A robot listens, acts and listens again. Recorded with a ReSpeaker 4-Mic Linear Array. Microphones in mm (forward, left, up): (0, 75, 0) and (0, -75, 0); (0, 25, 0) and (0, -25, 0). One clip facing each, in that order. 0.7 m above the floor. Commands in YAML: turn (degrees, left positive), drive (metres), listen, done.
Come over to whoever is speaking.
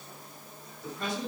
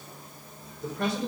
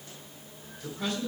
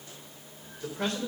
turn: -70
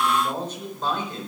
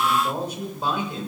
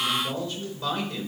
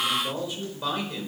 turn: -10
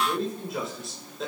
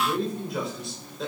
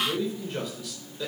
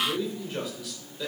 drive: 1.0
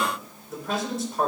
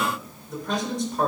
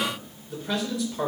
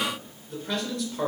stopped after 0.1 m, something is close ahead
done: "Something is in my way. I am facing the man speaking but have not reached it."